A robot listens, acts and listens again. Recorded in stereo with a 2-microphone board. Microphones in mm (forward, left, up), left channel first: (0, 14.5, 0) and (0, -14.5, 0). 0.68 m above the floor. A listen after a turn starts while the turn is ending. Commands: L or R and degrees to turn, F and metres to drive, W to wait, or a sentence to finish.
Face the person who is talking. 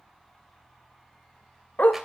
W
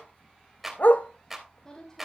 L25
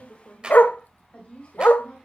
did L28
L130
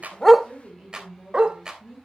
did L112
L10
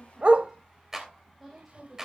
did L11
Found it: a woman speaking, straight ahead, over 4 m away.